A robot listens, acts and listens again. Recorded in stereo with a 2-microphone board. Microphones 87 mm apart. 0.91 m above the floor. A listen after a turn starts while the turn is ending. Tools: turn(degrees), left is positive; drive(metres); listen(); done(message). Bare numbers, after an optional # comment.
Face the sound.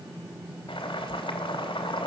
turn(90)
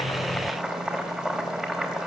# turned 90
done("Found it: boiling, straight ahead, 2 to 4 m away.")